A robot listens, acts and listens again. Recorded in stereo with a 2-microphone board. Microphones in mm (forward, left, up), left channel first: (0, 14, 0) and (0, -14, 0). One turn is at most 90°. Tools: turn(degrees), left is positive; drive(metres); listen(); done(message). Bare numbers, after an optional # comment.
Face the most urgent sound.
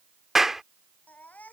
turn(90)
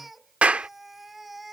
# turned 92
done("Facing the baby crying.")